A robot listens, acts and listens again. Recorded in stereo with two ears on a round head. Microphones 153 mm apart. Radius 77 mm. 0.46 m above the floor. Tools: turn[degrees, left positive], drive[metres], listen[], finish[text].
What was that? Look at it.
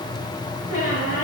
Thought: The squeak: about 45° left or 135° left.
Action: turn[45]
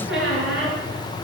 Action: finish[Found it: a squeak, straight ahead.]